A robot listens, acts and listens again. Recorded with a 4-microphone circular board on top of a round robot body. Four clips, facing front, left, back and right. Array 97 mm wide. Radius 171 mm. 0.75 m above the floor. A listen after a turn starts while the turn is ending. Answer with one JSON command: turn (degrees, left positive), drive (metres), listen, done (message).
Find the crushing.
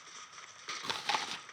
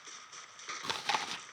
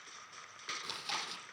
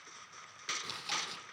{"listen": true}
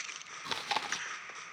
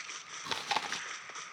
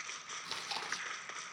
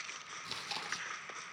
{"listen": true}
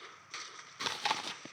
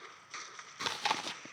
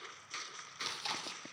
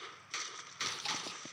{"done": "I can't make out crushing to turn to."}